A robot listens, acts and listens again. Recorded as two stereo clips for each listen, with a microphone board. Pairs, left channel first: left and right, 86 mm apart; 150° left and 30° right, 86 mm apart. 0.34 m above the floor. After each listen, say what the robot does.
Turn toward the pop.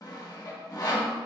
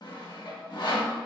Keep listening.
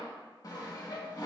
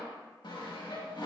Keep listening.
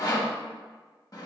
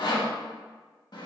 I can't make out a pop, only sawing.